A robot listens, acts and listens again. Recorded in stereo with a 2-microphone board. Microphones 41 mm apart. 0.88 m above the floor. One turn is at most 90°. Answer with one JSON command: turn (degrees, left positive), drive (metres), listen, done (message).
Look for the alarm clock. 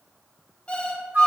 {"turn": 35}
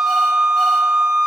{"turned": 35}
{"listen": true}
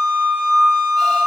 {"listen": true}
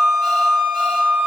{"done": "I heard an alarm clock, but can't make it out now. It was about straight ahead or 110° left."}